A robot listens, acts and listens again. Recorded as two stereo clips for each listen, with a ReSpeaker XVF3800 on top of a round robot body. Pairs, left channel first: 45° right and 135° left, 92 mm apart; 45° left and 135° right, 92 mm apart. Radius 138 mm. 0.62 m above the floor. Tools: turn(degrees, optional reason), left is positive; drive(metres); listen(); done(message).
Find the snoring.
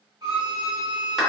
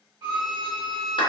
listen()
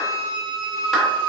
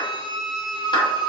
listen()
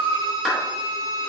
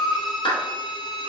done("I can't make out snoring, only a violin and a clap.")